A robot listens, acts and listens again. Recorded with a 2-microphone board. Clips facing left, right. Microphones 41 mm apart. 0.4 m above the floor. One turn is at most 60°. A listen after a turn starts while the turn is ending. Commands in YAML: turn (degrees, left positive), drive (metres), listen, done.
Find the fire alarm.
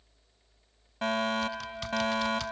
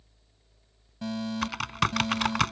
turn: 55
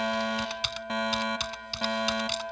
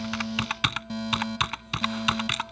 turn: 55
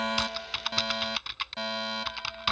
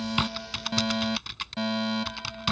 done: "Found it: a fire alarm, straight ahead."